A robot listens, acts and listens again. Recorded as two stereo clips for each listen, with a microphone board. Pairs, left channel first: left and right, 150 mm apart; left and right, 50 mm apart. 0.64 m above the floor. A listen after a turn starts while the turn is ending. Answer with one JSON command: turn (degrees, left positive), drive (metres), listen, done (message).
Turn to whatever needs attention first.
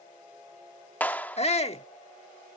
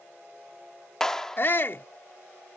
{"turn": 45}
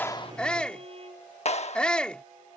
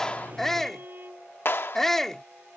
{"turn": 10}
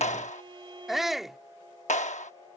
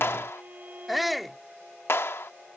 {"done": "Facing the shout."}